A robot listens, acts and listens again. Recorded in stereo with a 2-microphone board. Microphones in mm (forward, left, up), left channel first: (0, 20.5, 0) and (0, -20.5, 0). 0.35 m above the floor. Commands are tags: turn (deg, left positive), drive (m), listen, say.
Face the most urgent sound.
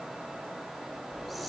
<listen/>
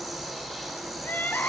<turn deg="50"/>
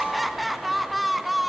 <say>Facing the crying.</say>